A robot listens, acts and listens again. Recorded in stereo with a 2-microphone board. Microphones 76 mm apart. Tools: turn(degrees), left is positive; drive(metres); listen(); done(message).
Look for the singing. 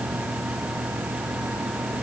listen()
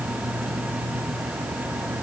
listen()
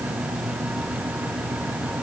done("I can't make out singing.")